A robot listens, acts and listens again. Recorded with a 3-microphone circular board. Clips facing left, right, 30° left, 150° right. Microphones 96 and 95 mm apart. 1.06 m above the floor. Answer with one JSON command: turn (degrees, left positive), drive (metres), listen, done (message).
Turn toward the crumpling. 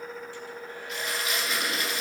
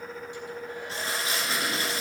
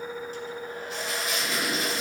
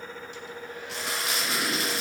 {"turn": -150}
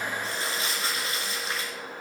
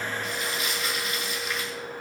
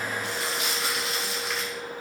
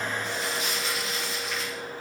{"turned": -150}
{"turn": 35}
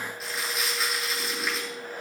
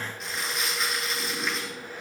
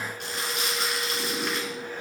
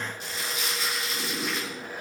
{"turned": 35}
{"done": "Found it: crumpling, straight ahead."}